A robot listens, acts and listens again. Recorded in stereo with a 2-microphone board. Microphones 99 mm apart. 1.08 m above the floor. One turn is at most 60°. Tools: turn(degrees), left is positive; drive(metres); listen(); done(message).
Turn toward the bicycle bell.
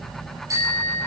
turn(degrees=-35)
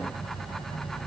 listen()
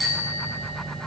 done("Facing the bicycle bell.")